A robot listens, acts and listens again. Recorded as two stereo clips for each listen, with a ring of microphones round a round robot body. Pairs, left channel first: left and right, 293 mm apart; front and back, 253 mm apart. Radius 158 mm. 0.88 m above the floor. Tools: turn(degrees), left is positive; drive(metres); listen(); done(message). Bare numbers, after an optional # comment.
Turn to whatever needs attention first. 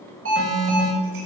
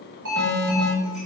# The alarm: 135° right.
turn(-135)
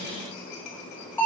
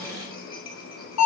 done("Found it: an alarm, straight ahead, over 4 m away.")